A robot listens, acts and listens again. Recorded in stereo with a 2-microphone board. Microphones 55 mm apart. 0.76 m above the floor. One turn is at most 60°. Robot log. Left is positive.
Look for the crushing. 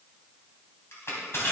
note: The crushing: about 50° left or 130° left.
cmd yaw +50
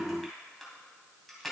end: Found it: crushing, straight ahead.